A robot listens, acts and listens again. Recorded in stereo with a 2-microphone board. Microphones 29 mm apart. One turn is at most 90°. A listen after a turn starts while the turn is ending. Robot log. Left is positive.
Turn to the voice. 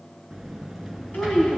cmd yaw +90
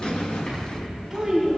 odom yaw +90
note: So it is at 10° right.
cmd yaw -10
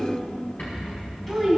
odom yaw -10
end: Found it: a child speaking, straight ahead.